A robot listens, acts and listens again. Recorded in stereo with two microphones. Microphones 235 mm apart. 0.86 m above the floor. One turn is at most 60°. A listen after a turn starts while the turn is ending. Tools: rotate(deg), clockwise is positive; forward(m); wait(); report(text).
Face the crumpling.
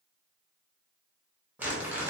rotate(30)
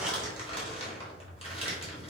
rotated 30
rotate(-25)
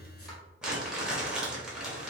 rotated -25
report("Facing the crumpling.")